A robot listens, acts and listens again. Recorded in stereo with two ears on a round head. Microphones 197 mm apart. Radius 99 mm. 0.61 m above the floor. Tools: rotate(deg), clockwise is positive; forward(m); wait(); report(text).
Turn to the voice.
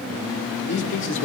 rotate(-60)
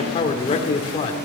rotate(-30)
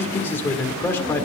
rotate(-10)
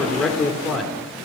report("Facing the man speaking, 1 to 2 m away.")